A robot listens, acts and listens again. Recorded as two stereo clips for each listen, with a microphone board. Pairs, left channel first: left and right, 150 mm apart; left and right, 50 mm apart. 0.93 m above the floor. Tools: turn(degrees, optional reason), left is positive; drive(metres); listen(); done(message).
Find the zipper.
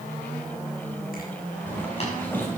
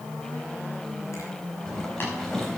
turn(degrees=30)
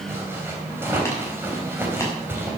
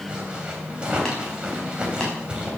turn(degrees=-15, reason="So it is at 15° right.")
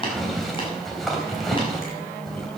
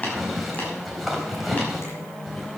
done("Facing the zipper.")